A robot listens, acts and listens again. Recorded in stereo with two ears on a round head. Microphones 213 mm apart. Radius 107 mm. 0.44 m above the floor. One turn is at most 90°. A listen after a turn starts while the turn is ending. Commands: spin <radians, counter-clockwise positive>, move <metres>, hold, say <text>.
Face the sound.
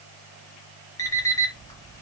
spin 0.52
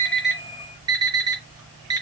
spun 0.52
spin -0.26
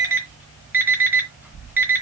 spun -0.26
spin -0.17
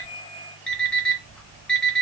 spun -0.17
say Facing the alarm clock, 2 to 4 m away.